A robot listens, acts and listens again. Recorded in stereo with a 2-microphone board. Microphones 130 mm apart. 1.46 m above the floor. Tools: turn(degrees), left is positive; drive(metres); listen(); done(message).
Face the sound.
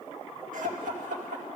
turn(degrees=-90)
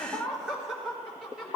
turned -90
done("Facing the laughter, over 4 m away.")